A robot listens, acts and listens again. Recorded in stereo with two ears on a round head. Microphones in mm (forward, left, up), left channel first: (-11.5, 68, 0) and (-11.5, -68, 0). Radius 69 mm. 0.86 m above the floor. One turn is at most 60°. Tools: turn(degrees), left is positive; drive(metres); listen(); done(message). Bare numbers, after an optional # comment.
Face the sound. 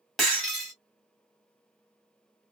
turn(30)
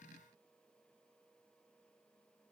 listen()
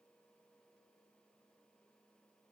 done("I heard breaking glass, but can't make it out now. It was about 30° right or 150° left.")